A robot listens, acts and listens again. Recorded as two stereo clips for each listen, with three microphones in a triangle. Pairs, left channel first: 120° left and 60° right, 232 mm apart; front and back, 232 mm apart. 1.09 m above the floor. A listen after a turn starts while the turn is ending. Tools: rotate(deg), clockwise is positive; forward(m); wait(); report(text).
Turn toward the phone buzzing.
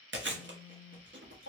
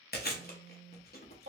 rotate(-15)
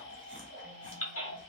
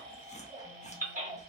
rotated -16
wait()
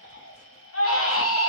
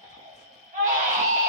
wait()
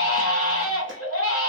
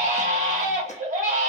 report("Facing where the phone buzzing came from. I can't hear it now.")